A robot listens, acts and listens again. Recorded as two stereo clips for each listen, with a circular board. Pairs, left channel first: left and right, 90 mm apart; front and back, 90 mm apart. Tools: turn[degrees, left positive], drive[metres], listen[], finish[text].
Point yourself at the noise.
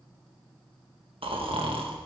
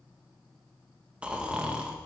Thought: The snoring: 105° right.
Action: turn[-105]
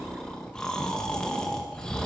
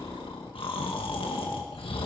Thought: The snoring is now 10° left.
Action: turn[10]
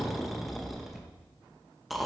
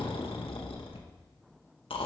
Action: finish[Found it: snoring, straight ahead.]